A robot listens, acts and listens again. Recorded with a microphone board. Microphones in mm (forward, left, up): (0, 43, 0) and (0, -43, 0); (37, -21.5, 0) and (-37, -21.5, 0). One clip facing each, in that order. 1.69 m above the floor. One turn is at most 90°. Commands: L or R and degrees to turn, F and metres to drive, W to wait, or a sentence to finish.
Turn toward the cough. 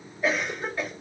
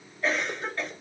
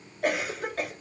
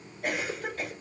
L10
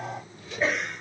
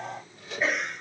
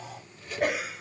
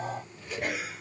Facing the cough.